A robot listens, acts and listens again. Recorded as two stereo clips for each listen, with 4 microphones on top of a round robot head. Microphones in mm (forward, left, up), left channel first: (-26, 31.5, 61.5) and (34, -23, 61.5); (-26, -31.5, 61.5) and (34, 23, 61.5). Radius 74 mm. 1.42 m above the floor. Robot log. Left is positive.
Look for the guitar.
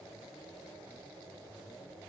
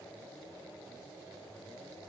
cmd idle
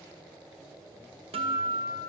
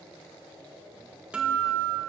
note: The guitar: 35° right.
cmd yaw -35
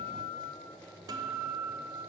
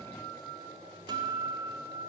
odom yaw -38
end: Facing the guitar.